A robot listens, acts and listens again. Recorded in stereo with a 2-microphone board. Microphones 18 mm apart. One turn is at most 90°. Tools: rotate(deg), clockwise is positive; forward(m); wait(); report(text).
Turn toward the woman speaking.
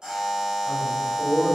rotate(70)
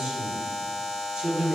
rotate(60)
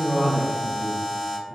rotate(40)
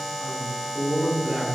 rotate(35)
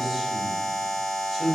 report("Found it: a woman speaking, straight ahead.")